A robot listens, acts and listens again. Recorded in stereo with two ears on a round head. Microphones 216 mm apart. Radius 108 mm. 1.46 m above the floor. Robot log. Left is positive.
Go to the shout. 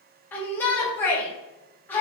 cmd yaw +30
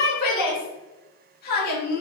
note: So it is at 140° left.
cmd yaw +140
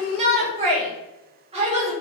note: The shout is now 25° right.
cmd yaw -25
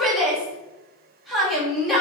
cmd fwd 1.0
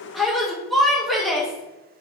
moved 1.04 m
cmd fwd 1.0
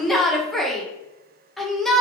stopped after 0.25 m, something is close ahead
end: I am next to the shout.